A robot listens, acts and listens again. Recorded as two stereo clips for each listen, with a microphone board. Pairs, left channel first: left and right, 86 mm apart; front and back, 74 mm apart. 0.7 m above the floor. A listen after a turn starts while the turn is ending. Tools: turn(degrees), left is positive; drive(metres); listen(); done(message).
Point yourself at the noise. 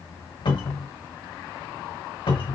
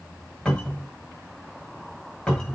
turn(degrees=80)
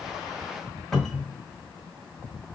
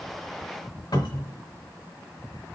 done("Found it: a cupboard door, straight ahead, 1 to 2 m away.")